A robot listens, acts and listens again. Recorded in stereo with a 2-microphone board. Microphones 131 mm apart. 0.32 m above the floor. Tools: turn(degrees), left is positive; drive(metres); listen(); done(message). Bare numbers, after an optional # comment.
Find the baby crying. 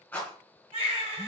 # The baby crying: about 45° right or 135° right.
turn(-45)
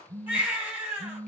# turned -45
# So it is at 15° right.
turn(-15)
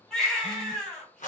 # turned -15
done("Facing the baby crying.")